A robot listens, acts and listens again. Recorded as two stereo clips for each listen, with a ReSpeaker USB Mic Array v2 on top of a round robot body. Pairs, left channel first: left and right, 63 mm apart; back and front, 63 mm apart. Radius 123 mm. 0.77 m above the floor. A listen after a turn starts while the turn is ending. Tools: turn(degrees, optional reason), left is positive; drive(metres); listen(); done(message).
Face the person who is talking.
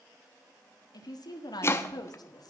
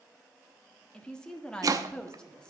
turn(degrees=100, reason="The woman speaking: 100° left.")
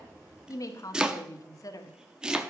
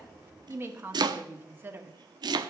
turn(degrees=55, reason="The woman speaking is now 55° left.")
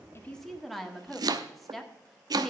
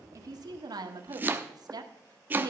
done("Facing the woman speaking.")